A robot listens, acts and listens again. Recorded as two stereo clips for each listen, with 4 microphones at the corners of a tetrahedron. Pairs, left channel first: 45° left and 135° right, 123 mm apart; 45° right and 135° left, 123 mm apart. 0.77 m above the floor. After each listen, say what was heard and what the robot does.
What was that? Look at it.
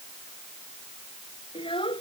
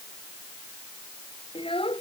Facing the child speaking.